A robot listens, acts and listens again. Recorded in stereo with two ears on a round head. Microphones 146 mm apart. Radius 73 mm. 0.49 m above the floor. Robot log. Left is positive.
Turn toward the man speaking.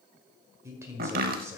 note: The man speaking: about 20° right or 160° right.
cmd yaw -20
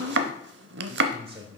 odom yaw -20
note: So it is at 140° right.
cmd yaw -140
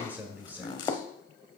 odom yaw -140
note: The man speaking is now 10° right.
cmd yaw -10
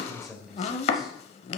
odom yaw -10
end: Facing the man speaking, 1 to 2 m away.